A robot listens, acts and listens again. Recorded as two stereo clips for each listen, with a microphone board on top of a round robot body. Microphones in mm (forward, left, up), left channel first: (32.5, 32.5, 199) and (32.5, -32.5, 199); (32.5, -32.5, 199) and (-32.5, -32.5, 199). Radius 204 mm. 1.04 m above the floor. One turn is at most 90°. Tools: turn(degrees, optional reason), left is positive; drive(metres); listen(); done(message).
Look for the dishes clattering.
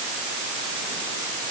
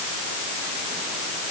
listen()
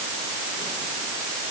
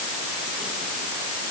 listen()
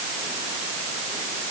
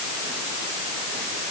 done("I can't make out dishes clattering.")